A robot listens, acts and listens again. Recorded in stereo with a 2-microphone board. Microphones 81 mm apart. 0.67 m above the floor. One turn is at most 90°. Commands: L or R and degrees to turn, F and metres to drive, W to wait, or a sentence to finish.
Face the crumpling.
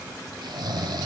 W
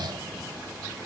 W
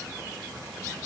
I can't make out crumpling, only snoring.